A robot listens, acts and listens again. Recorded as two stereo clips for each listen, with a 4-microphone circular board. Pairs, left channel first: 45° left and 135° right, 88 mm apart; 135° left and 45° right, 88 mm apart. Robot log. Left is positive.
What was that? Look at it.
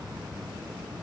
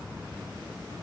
cmd idle
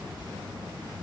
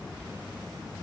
cmd idle
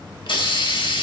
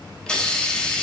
note: The hiss: 55° left.
cmd yaw +55
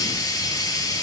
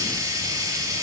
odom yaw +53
end: Found it: a hiss, straight ahead.